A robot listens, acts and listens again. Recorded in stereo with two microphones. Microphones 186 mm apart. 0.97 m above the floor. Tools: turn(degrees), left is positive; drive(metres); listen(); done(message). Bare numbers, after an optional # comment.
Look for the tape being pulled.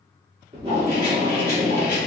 # The tape being pulled: about 30° right or 150° right.
turn(-30)
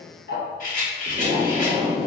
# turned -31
# So it is at 120° right.
turn(-120)
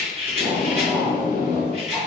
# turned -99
# The tape being pulled is now 20° right.
turn(-20)
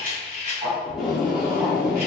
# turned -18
done("Facing the tape being pulled, 1 to 2 m away.")